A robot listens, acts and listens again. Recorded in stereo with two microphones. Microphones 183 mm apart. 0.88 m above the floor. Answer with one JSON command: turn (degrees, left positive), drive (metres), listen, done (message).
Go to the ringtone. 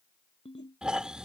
{"turn": 35}
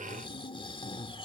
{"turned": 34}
{"listen": true}
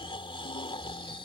{"listen": true}
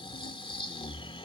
{"done": "I heard a ringtone, but can't make it out now. It was about straight ahead or 115° left. I did not reach it."}